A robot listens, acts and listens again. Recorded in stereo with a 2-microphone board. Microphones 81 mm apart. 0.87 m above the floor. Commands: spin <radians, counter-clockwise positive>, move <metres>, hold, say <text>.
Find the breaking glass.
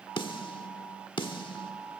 hold
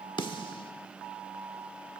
hold
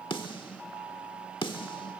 say I can't make out breaking glass to turn to.